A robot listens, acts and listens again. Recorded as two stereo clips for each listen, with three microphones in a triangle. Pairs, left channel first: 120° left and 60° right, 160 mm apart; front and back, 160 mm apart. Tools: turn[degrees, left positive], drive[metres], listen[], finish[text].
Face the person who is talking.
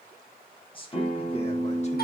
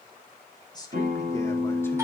Thought: The man speaking: 65° left.
Action: turn[65]
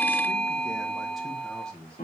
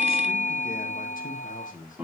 Thought: The man speaking is now 35° left.
Action: turn[35]
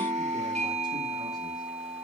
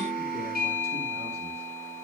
Action: listen[]
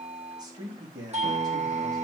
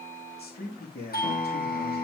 Action: finish[Found it: a man speaking, straight ahead, 2 to 4 m away.]